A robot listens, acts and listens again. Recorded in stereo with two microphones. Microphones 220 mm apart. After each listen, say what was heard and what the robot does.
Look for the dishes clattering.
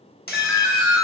The dishes clattering: about 45° left or 135° left. Turn 45° left.
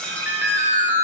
Facing the dishes clattering.